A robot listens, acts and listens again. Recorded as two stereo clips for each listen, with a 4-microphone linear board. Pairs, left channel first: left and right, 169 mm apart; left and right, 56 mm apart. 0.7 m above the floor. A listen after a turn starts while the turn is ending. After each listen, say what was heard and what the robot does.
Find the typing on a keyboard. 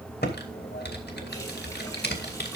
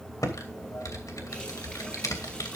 Turn 90° left.
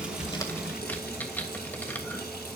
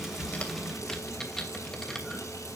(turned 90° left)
So it is at 10° left. Turn 10° left.
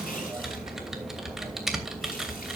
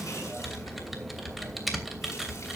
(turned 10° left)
Found it: typing on a keyboard, straight ahead, 2 to 4 m away.